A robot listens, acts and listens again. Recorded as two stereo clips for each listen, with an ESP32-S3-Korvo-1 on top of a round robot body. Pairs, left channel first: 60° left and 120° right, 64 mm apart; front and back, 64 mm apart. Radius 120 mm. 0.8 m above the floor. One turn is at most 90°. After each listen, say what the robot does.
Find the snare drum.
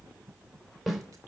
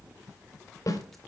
Turn 30° right.
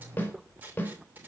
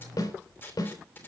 Found it: a snare drum, straight ahead, over 4 m away.